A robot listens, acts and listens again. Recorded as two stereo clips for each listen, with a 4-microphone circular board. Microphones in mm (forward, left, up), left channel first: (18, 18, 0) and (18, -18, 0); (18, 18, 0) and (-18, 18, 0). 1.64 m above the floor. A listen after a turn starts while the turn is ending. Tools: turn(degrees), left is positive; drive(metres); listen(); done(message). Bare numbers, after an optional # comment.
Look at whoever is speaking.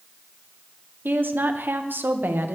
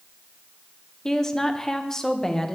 # The woman speaking: 75° right.
turn(-75)
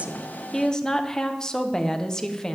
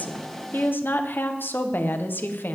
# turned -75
# The woman speaking is now 20° left.
turn(20)
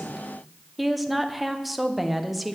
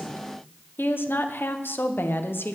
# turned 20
done("Facing the woman speaking.")